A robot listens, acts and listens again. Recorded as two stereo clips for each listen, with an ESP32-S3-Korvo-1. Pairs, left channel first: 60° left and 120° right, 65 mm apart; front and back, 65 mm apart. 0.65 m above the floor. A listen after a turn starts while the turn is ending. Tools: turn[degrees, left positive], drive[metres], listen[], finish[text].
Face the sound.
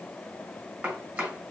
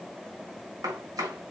Thought: The chopping: straight behind.
Action: turn[180]
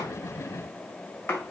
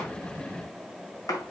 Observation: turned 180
Thought: The chopping is now 10° left.
Action: turn[10]
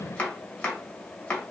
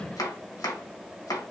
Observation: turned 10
Action: finish[Facing the chopping, 2 to 4 m away.]